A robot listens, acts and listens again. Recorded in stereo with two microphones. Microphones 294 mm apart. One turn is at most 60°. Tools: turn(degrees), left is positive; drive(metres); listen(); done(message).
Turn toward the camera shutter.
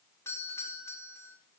listen()
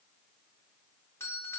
listen()
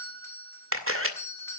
turn(degrees=-45)
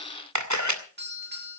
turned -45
turn(degrees=-60)
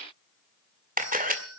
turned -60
turn(degrees=-30)
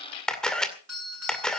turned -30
done("Facing the camera shutter.")